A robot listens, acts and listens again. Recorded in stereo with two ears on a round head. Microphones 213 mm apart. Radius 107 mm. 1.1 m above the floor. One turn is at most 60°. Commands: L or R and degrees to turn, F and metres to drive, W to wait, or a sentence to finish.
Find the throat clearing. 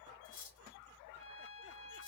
W
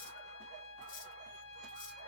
W
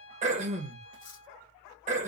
R30
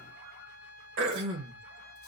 R60
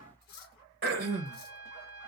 R50
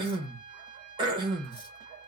R20
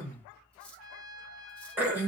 R10
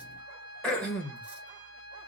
Facing the throat clearing.